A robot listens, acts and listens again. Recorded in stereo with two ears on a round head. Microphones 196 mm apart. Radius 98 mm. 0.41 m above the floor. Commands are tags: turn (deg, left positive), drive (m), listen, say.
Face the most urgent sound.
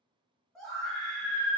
<turn deg="30"/>
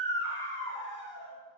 <turn deg="150"/>
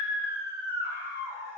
<turn deg="-20"/>
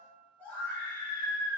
<say>Facing the scream.</say>